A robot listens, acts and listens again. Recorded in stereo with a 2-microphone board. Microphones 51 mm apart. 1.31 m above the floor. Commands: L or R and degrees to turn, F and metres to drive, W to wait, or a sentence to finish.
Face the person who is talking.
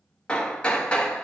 W
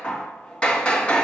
W
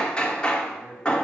L30
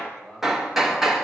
R10
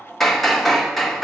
W
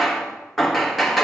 W
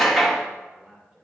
R15
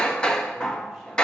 W
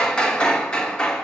W
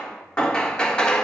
I heard a man speaking from this way, but can't make it out now.